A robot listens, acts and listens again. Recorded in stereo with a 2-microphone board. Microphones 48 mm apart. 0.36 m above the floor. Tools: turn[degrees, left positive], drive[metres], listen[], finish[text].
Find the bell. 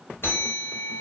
Thought: The bell: about 60° left or 120° left.
Action: turn[60]
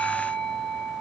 Thought: So it is at 15° left.
Action: turn[15]
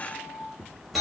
Action: finish[Facing the bell.]